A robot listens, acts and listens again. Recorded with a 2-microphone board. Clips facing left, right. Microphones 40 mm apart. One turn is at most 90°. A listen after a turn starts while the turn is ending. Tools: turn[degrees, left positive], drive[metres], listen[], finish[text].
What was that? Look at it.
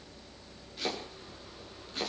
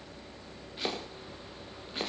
Thought: The chopping: about 20° right or 160° right.
Action: turn[-20]
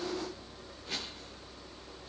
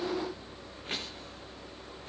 Action: listen[]
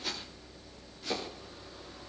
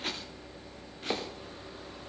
Thought: So it is at 135° right.
Action: turn[-90]
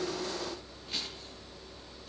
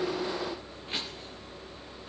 Thought: Nothing new. It was at 45° right.
Action: turn[-45]
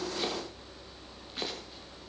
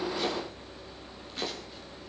Action: finish[Facing the chopping, over 4 m away.]